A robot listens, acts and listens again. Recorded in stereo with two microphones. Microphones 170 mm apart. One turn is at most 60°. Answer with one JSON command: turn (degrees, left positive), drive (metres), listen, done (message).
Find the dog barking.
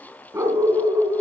{"turn": -30}
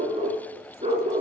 {"turn": -60}
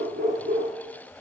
{"turn": -60}
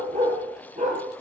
{"turn": -50}
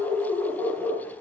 {"done": "Found it: a dog barking, straight ahead."}